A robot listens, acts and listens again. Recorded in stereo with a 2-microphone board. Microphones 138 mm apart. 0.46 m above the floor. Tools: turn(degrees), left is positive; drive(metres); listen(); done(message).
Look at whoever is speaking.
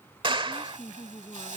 turn(degrees=25)
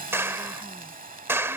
listen()
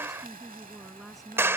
done("Found it: a woman speaking, straight ahead.")